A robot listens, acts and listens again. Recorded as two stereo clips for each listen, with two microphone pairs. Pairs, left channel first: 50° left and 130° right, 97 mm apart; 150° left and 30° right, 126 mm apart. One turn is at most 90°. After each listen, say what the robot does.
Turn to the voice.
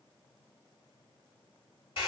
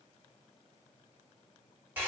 Keep listening.
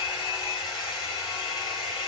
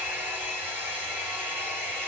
Keep listening.
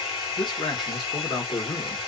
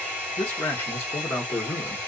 Turn 80° left.
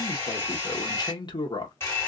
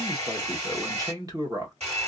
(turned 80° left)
Turn 25° left.
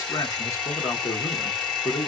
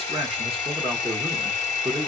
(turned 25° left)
Facing the man speaking.